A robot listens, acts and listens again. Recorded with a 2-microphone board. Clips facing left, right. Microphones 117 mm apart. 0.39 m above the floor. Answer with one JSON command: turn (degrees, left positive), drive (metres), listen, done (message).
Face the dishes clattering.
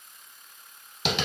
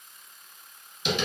{"listen": true}
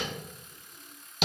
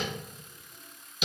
{"listen": true}
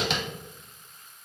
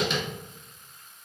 {"done": "I can't make out dishes clattering, only tapping."}